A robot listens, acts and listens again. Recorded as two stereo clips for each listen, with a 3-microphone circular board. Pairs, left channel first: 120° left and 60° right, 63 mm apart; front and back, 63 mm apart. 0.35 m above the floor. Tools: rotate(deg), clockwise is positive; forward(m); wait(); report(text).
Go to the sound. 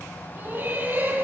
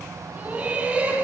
rotate(115)
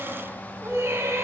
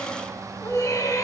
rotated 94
rotate(20)
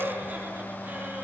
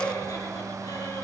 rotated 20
forward(1.0)
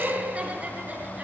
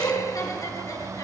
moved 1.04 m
forward(1.0)
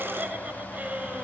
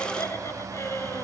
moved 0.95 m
forward(1.0)
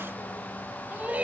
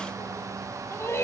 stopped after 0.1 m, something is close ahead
report("I am next to the laughter.")